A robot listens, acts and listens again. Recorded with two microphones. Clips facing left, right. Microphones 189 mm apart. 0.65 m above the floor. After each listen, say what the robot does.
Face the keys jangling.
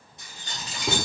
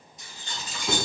Turn 70° left.
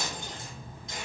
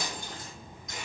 Keep listening.
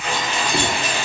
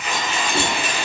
Turn 40° left.
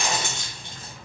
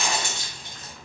Turn 25° left.
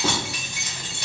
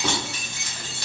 Turn 15° left.
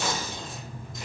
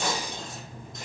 Keep listening.
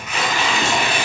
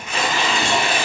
Keep listening.
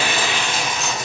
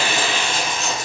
Facing where the keys jangling came from. I can't hear it now.